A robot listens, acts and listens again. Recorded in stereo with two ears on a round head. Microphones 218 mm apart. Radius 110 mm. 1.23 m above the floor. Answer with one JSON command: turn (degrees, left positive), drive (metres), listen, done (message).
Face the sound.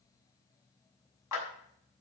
{"turn": 90}
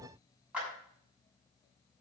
{"done": "Facing the clap, over 4 m away."}